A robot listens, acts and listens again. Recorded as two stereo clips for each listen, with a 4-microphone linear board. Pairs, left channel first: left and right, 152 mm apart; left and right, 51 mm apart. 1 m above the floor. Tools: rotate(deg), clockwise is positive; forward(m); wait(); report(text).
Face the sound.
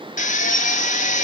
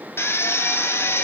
rotate(-55)
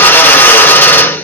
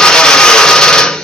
rotate(-15)
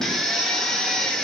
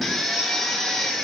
wait()
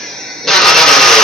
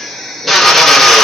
report("Found it: a drill, straight ahead.")